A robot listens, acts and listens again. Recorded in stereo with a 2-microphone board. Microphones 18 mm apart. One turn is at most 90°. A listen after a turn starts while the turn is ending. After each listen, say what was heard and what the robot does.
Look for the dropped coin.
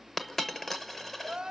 Turn 30° left.
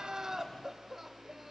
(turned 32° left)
Keep listening.
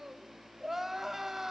I heard a dropped coin, but can't make it out now. It was about 20° right or 135° left.